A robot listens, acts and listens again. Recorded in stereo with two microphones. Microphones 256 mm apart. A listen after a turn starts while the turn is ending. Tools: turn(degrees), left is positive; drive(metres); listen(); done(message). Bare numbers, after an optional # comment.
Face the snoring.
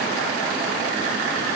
listen()
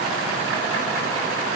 listen()
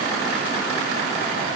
done("I can't make out snoring.")